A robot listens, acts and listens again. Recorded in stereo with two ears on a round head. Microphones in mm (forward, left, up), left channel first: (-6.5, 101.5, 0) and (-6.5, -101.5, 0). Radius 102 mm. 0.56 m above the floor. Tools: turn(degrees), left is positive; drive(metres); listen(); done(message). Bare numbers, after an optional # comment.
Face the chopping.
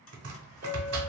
# The chopping: about 75° right or 105° right.
turn(-75)
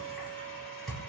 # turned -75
done("Found it: chopping, straight ahead.")